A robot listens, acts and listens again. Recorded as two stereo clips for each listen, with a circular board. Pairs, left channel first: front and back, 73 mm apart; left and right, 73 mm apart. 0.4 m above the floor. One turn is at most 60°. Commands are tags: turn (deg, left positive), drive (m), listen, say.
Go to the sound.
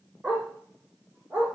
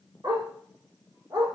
<turn deg="-60"/>
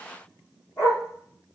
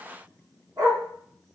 <turn deg="-55"/>
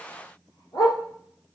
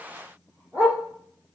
<turn deg="-20"/>
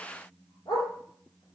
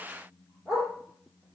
<drive m="1.0"/>
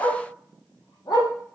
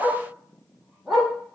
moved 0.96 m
<drive m="1.0"/>
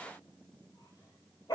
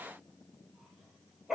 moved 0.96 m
<drive m="1.0"/>
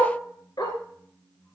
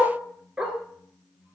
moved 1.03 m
<turn deg="-15"/>
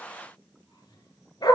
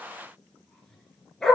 <drive m="1.0"/>
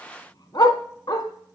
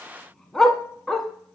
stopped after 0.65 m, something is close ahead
<say>Arrived at the dog barking, straight ahead.</say>